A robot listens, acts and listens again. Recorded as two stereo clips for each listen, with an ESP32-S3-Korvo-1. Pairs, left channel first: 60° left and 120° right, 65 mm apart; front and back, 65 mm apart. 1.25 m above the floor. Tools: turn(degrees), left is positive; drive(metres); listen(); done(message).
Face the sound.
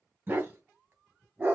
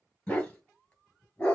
turn(degrees=-65)
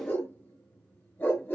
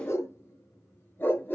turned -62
turn(degrees=30)
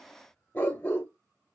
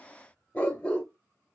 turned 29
turn(degrees=50)
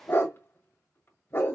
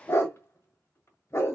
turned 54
turn(degrees=30)
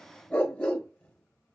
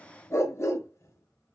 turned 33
done("Facing the dog barking.")